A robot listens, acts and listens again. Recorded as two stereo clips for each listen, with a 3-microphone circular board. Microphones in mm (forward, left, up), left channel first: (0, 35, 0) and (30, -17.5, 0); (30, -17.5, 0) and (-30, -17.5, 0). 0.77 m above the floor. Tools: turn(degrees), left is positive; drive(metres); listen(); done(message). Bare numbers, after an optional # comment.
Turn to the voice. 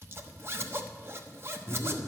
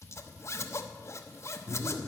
# The man speaking: 130° left.
turn(130)
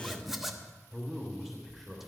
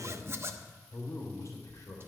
# The man speaking is now 30° left.
turn(30)
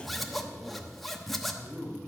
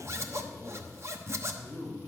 # The man speaking is now 30° left.
turn(30)
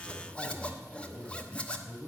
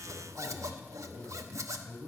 # The man speaking is now 10° left.
turn(10)
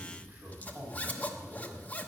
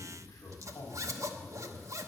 done("Found it: a man speaking, straight ahead.")